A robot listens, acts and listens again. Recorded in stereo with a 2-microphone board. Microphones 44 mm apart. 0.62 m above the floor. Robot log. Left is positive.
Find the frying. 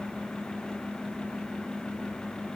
cmd idle
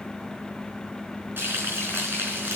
note: The frying: about 55° right or 125° right.
cmd yaw -55
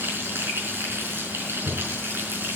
note: So it is at 75° right.
cmd yaw -75
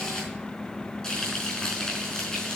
note: The frying is now 10° left.
cmd yaw +10
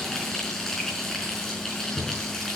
end: Found it: frying, straight ahead, over 4 m away.